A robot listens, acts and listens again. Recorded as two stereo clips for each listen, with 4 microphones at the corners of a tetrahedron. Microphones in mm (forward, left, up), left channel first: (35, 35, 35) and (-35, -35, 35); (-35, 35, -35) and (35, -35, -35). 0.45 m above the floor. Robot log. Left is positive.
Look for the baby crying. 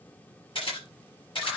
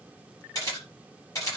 cmd idle
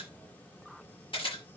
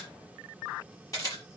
cmd idle
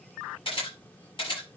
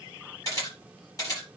end: I can't make out a baby crying, only a camera shutter.